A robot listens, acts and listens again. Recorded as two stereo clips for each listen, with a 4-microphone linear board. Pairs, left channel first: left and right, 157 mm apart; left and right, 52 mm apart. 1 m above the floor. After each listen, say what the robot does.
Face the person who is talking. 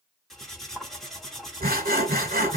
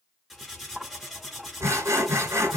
Keep listening.
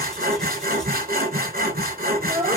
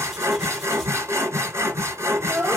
Turn 30° right.
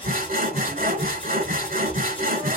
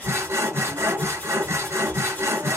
Keep listening.
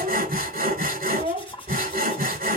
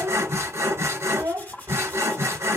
Turn 115° right.
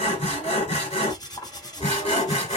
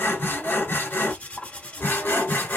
Keep listening.
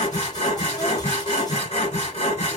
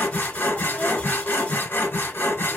Keep listening.
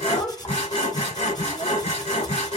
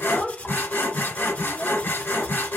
Found it: a child speaking, straight ahead.